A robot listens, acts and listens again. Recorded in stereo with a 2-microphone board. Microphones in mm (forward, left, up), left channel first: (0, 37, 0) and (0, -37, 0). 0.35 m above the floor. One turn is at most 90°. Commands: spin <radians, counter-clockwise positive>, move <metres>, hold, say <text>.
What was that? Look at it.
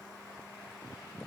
hold
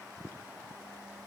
hold
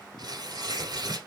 spin -1.22
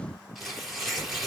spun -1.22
say Found it: tearing paper, straight ahead.